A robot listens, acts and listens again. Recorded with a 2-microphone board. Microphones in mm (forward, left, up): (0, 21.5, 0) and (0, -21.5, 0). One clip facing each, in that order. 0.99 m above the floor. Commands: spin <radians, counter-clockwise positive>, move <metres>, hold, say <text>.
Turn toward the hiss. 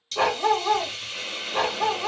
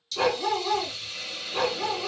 spin 0.96
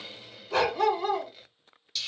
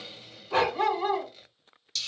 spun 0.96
spin 0.17
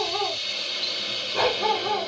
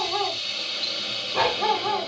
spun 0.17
say Facing the hiss, under 1 m away.